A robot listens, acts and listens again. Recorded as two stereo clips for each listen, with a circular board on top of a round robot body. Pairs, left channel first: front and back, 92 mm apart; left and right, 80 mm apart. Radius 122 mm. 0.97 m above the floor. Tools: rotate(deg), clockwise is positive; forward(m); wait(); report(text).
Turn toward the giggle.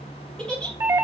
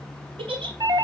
rotate(80)
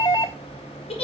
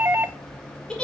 rotate(-10)
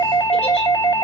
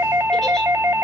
wait()
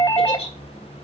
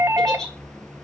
report("Facing the giggle.")